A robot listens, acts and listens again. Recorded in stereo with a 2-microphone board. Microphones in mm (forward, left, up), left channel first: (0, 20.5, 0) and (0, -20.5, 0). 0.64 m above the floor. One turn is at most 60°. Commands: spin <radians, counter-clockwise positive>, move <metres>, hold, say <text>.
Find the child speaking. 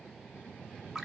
hold
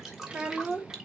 spin -0.52
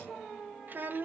spin -1.05
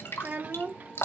spin -1.05
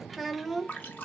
say Facing the child speaking, 1 to 2 m away.